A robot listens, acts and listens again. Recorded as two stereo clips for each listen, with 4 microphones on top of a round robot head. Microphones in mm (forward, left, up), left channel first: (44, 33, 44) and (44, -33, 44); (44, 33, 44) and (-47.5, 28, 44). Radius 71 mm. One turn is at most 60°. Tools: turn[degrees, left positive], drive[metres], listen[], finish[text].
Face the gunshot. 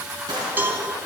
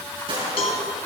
Thought: The gunshot: 135° right.
Action: turn[-60]
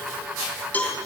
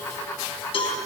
Thought: Nothing new. It was at 75° right.
Action: turn[-60]
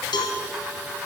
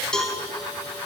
Thought: Nothing new. It was at 15° right.
Action: turn[-15]
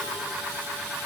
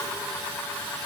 Action: finish[Facing where the gunshot came from. I can't hear it now.]